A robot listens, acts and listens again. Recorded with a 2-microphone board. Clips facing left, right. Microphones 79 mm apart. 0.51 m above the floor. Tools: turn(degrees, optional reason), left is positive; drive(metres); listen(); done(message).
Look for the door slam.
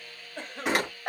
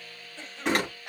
turn(degrees=30)
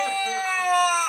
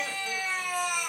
listen()
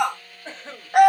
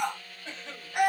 done("I heard a door slam, but can't make it out now. It was about 25° right or 145° left.")